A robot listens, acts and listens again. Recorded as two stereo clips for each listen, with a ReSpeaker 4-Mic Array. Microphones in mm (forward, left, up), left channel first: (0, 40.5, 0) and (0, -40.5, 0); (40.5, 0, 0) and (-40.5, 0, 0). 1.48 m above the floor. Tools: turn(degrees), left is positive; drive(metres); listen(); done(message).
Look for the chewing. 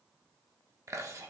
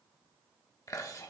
turn(degrees=-45)
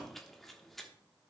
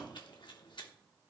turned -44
done("Facing the chewing.")